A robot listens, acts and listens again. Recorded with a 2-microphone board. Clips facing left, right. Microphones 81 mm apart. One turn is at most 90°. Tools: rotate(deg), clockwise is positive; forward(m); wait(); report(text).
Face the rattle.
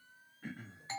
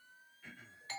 wait()
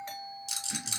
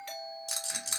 rotate(40)
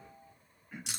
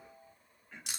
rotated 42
report("Found it: a rattle, straight ahead, 1 to 2 m away.")